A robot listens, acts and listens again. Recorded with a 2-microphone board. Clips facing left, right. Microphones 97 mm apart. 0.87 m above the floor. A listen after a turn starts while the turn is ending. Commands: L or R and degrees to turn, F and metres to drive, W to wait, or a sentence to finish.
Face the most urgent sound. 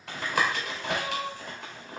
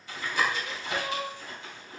R30
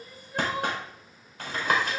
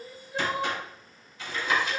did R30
Found it: crying, straight ahead, 2 to 4 m away.